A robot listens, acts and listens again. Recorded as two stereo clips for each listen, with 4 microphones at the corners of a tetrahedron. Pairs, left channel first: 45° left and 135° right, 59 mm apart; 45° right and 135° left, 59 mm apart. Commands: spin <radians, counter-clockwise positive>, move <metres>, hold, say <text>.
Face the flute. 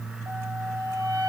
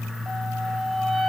spin -2.53
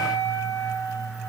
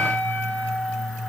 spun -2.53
spin 0.17
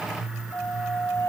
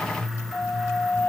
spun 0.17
say Facing the flute.